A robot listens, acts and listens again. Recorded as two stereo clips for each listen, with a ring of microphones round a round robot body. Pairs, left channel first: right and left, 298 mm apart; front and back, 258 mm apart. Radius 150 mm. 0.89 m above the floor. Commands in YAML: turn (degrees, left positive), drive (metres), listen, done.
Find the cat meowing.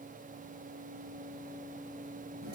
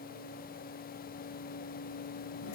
listen: true
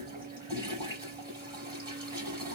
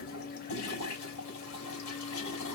listen: true
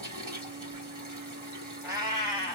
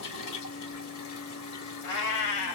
turn: 15
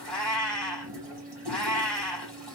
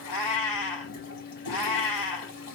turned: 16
done: "Facing the cat meowing."